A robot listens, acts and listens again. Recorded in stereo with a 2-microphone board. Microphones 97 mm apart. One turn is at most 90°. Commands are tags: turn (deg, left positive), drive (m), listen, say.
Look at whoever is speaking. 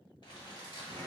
<listen/>
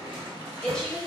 <turn deg="30"/>
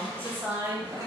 <turn deg="-25"/>
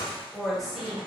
<say>Found it: a woman speaking, straight ahead.</say>